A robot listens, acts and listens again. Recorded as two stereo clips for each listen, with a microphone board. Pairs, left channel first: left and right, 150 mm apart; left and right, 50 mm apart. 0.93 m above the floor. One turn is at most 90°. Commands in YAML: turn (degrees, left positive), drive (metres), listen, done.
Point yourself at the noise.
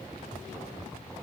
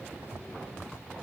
listen: true
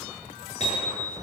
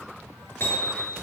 turn: 50
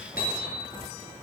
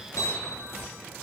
turn: 85
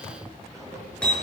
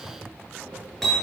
done: "Found it: hammering, straight ahead."